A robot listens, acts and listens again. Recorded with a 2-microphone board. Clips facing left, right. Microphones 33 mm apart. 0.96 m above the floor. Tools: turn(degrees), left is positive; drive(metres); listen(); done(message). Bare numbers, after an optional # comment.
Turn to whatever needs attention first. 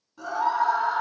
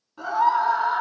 # The scream: about 40° right or 140° right.
turn(-40)
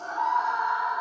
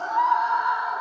# So it is at 100° right.
turn(-100)
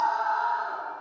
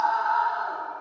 # The scream is now 45° right.
turn(-45)
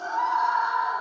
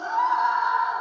# The scream is now 10° right.
turn(-10)
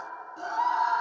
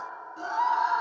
done("Found it: a scream, straight ahead.")